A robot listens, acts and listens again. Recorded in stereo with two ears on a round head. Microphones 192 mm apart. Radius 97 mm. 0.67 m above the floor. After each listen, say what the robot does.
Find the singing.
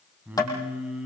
Turn 30° right.
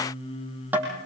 Turn 25° left.
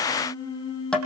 Turn 20° left.
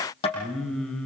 Found it: singing, straight ahead.